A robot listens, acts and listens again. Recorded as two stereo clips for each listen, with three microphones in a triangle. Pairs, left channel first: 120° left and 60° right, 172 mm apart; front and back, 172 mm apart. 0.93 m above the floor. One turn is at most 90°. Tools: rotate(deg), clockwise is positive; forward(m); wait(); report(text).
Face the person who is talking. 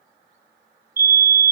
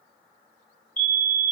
wait()
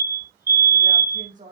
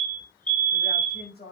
rotate(20)
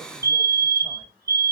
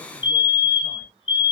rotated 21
wait()
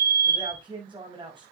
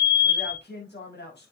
report("Found it: a man speaking, straight ahead.")